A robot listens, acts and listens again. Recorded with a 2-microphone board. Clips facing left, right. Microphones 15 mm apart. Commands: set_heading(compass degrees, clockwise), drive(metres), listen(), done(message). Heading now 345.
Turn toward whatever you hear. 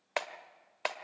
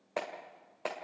set_heading(285)
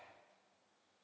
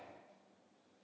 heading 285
listen()
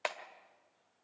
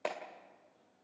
set_heading(250)
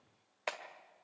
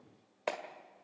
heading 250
done("Found it: a clap, straight ahead.")